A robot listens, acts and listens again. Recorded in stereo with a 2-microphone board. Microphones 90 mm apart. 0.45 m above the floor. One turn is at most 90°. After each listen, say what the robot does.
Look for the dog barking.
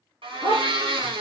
Turn 60° right.
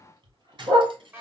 Turn 55° right.
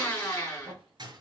Keep listening.
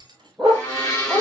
Facing the dog barking.